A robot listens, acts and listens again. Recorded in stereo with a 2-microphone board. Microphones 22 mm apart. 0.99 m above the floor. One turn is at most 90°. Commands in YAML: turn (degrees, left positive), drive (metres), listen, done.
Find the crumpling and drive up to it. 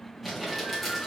turn: -30
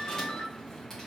listen: true
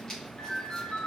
turn: 25
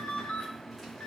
listen: true
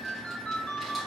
listen: true
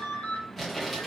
drive: 1.0
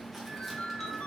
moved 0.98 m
listen: true
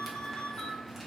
listen: true
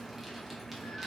done: "Facing where the crumpling came from. I can't hear it now. I did not reach it."